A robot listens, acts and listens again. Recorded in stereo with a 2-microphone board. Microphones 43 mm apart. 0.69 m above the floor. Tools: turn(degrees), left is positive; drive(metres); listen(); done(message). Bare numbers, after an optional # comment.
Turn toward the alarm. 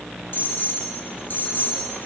# The alarm: about 50° left or 130° left.
turn(50)
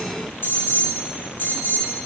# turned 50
# So it is at 70° left.
turn(70)
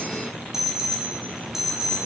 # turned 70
done("Facing the alarm, 2 to 4 m away.")